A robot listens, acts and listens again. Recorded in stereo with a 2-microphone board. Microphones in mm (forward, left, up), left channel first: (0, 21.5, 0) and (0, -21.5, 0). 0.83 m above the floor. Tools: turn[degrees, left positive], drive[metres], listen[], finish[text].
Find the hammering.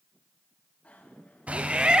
Thought: The hammering: about 30° right or 150° right.
Action: turn[-30]
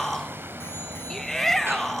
Thought: So it is at 120° right.
Action: turn[-120]
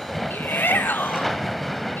Action: finish[Found it: hammering, straight ahead.]